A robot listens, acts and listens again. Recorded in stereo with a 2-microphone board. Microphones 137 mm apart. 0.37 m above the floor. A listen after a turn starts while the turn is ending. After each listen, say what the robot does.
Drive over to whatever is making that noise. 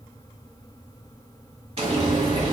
Turn 50° right.
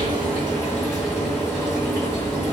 Drive 1.0 m forward.
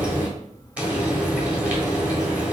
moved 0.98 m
Turn 15° right.
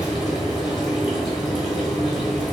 Drive 1.0 m forward.
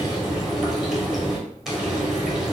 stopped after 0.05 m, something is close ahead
Arrived at the frying, straight ahead.